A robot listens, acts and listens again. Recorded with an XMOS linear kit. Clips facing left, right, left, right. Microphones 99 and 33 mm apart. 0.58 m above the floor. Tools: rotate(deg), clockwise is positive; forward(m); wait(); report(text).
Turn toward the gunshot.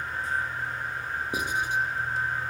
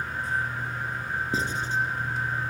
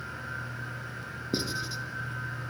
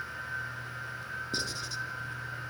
wait()
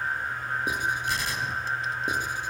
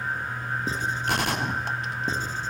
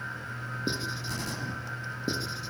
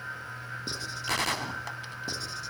rotate(65)
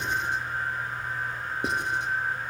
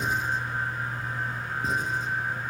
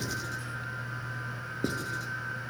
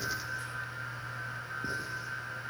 wait()
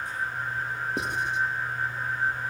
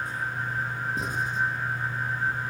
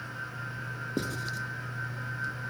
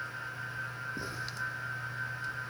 report("I heard a gunshot, but can't make it out now. It was about straight ahead or 50° right.")